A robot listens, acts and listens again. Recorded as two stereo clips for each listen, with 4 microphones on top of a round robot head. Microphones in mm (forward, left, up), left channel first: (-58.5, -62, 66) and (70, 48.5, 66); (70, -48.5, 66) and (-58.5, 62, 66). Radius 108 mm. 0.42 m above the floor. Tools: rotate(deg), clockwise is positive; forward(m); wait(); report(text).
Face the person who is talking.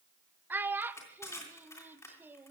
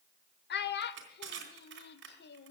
rotate(40)
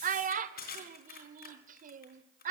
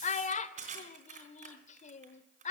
report("Found it: a child speaking, straight ahead.")